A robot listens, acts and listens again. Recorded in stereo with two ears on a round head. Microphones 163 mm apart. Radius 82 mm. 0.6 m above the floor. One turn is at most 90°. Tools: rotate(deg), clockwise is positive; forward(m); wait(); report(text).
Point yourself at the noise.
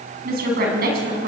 rotate(55)
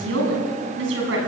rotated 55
rotate(75)
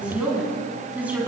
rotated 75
rotate(10)
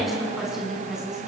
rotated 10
report("Facing the woman speaking, over 4 m away.")